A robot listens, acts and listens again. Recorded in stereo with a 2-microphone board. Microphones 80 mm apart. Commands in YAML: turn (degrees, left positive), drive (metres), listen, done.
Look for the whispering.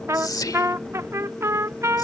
turn: 50
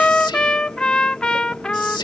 turn: 75
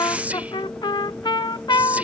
turn: -15
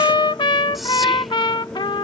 listen: true
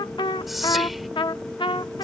done: "Facing the whispering."